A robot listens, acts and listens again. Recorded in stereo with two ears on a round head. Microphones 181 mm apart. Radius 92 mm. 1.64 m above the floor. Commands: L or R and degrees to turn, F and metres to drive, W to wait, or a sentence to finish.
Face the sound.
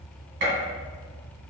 R60
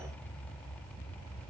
W
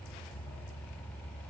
I heard a gunshot, but can't make it out now. It was about straight ahead or 60° right.